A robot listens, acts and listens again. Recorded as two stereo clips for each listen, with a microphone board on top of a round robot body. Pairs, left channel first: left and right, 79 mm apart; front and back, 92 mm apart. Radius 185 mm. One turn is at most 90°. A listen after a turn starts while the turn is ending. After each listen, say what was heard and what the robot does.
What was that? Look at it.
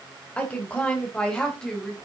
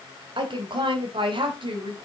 The woman speaking: 170° left. Turn 90° left.
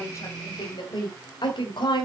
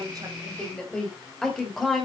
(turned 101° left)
The woman speaking is now 90° left. Turn 90° left.
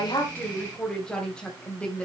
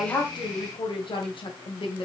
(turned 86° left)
The woman speaking is now 15° left. Turn 15° left.
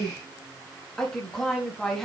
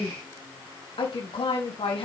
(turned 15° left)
Facing the woman speaking.